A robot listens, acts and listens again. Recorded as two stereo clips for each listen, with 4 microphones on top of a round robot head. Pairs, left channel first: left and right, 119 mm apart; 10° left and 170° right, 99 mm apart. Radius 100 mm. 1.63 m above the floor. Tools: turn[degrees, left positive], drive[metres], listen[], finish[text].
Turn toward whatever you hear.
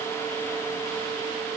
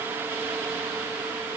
Action: listen[]
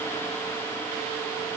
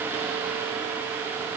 Action: listen[]
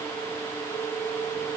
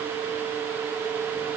Action: finish[I can't make out anything.]